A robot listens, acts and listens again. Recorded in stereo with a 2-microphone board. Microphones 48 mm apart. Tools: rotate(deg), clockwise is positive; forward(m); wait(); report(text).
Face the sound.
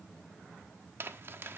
rotate(55)
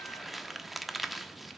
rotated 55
report("Facing the crumpling.")